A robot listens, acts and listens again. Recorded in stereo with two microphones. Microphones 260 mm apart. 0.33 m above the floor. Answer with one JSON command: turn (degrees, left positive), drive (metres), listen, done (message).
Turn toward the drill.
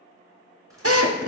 {"turn": -65}
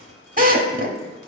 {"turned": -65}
{"turn": -35}
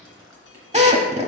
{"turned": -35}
{"turn": -25}
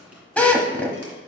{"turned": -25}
{"done": "Found it: a drill, straight ahead."}